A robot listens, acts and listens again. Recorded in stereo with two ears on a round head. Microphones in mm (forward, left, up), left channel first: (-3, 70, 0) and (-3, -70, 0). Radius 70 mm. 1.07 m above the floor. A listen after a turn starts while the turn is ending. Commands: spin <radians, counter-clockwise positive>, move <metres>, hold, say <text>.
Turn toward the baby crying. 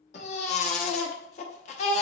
spin 0.79
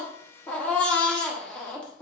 spin 0.17
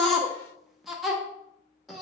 say Facing the baby crying.